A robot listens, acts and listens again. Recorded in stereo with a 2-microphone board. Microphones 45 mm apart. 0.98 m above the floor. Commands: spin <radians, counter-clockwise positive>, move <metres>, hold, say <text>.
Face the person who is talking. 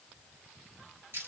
hold
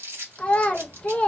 spin 0.44
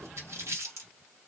hold
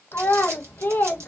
spin 2.18
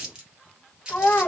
spin 0.79
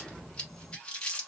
hold
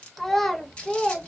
say Found it: a child speaking, straight ahead, under 1 m away.